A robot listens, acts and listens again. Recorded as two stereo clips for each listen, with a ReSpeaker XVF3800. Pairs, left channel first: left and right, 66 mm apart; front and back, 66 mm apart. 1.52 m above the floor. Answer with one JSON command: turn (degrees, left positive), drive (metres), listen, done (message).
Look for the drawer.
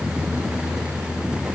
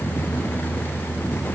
{"listen": true}
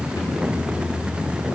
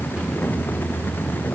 {"listen": true}
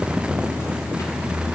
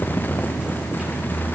{"done": "I can't make out a drawer."}